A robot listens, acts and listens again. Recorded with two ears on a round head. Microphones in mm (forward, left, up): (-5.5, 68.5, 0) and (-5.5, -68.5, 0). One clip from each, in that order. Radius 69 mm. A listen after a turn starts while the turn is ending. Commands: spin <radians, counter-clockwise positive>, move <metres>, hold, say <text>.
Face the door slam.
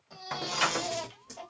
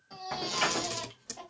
spin 0.70
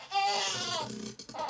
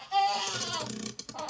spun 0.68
hold
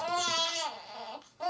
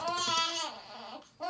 say I heard a door slam, but can't make it out now. It was about straight ahead or 100° left.